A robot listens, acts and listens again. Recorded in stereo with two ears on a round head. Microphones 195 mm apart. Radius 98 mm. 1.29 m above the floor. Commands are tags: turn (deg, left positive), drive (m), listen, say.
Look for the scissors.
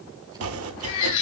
<listen/>
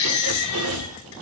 <listen/>
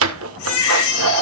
<say>I can't make out scissors, only a baby crying and chopping.</say>